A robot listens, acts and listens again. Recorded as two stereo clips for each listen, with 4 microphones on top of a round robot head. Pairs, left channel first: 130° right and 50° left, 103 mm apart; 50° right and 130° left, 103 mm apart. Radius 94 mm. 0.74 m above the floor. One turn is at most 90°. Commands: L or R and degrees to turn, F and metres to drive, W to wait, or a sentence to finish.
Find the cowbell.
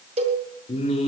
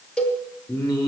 L30
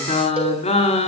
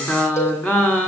W
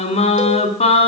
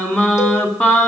W
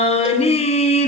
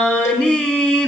Facing where the cowbell came from. I can't hear it now.